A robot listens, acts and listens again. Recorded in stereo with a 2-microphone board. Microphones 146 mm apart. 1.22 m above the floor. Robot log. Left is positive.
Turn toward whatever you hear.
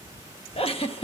note: The giggle: about 45° left or 135° left.
cmd yaw +45
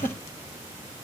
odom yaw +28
note: So it is at 105° left.
cmd yaw +105
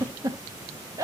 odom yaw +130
note: The giggle is now 25° right.
cmd yaw -25
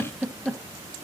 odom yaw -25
end: Facing the giggle, 1 to 2 m away.